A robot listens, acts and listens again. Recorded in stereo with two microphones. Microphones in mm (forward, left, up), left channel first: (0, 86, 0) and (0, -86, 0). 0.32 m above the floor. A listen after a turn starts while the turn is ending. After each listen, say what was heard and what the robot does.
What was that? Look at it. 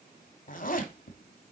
The zipper: about 55° left or 125° left. Turn 55° left.
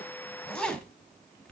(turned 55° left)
Facing the zipper.